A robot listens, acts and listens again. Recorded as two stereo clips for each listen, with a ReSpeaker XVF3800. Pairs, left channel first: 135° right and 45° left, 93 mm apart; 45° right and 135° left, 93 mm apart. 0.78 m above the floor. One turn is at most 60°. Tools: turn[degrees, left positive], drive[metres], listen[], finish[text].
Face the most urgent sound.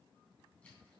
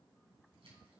Action: listen[]
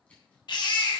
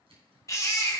Thought: The baby crying: 100° right.
Action: turn[-60]
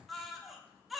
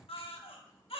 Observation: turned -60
Thought: The baby crying is now 45° right.
Action: turn[-45]
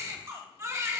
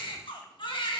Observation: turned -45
Thought: The baby crying is now 15° right.
Action: turn[-15]
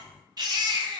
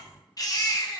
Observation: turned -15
Action: finish[Found it: a baby crying, straight ahead.]